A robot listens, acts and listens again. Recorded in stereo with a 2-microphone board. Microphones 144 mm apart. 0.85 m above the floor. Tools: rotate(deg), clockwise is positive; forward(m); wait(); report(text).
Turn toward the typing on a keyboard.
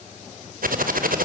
rotate(90)
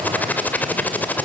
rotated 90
rotate(-10)
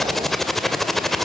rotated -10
report("Facing the typing on a keyboard.")